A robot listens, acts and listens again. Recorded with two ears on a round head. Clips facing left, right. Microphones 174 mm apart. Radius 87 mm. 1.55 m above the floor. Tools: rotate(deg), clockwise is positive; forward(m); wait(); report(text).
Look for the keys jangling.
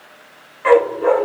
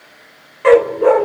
wait()
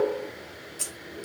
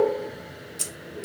rotate(30)
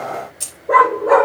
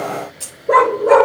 rotate(-20)
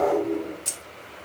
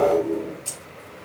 rotate(-15)
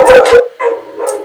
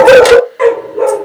wait()
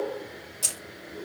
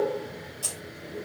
rotate(-25)
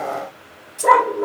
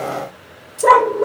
report("Found it: keys jangling, straight ahead, 2 to 4 m away.")